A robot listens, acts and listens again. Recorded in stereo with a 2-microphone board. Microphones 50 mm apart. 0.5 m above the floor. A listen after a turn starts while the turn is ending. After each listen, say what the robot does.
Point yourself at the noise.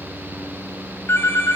Turn 70° left.
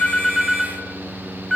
Facing the phone ringing, 1 to 2 m away.